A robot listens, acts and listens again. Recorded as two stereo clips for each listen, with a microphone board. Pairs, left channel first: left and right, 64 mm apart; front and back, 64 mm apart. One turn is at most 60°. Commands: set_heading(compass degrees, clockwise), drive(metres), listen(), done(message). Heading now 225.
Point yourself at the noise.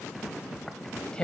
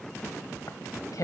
set_heading(210)
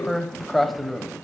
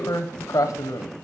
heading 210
done("Facing the tearing paper, 1 to 2 m away.")